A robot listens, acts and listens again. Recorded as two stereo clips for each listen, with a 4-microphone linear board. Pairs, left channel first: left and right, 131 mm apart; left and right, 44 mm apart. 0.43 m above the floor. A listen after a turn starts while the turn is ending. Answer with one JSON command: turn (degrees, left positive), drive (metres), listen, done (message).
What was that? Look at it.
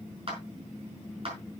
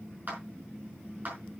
{"turn": -45}
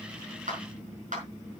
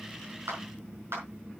{"turn": -85}
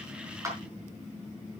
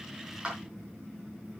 {"listen": true}
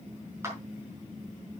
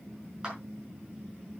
{"turn": -20}
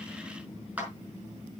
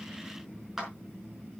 {"turn": -10}
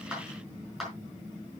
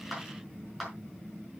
{"done": "Facing the clap."}